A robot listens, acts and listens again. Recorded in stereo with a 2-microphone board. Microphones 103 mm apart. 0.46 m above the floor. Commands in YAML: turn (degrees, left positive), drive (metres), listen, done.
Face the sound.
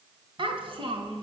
turn: -65
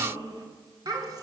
turn: -40
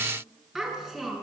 done: "Facing the child speaking, over 4 m away."